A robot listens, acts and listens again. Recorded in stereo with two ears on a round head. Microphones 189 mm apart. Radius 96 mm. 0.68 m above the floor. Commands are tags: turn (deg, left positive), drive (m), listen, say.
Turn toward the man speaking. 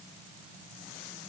<listen/>
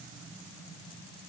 <listen/>
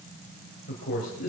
<turn deg="40"/>
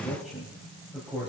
<say>Found it: a man speaking, straight ahead.</say>